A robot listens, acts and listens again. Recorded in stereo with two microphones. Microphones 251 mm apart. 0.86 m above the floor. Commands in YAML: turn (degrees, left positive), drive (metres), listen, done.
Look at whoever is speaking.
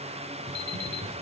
listen: true
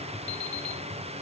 listen: true
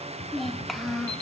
turn: 30
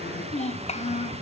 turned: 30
turn: 150
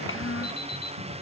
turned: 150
turn: 60
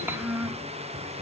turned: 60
turn: -10
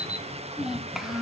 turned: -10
done: "Facing the child speaking."